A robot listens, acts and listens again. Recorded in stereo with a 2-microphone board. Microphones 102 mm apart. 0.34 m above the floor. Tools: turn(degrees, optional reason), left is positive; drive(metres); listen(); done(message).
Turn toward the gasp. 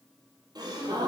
turn(degrees=-40, reason="The gasp: about 40° right or 140° right.")
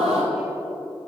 turn(degrees=-100, reason="So it is at 100° right.")
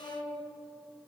done("I heard a gasp from this way, but can't make it out now.")